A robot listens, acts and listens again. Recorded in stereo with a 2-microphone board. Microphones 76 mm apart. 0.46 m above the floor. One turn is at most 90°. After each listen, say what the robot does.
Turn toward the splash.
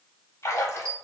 Turn 40° left.
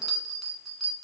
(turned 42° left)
Keep listening.
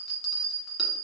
I heard a splash, but can't make it out now. It was about straight ahead or 100° left.